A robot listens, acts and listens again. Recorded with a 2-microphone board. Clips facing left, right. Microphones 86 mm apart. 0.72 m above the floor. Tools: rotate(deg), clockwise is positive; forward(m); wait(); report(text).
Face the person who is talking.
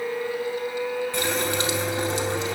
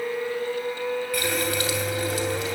wait()
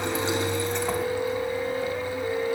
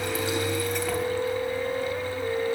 wait()
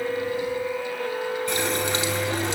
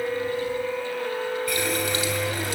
report("I can't make out anyone speaking, only a running tap.")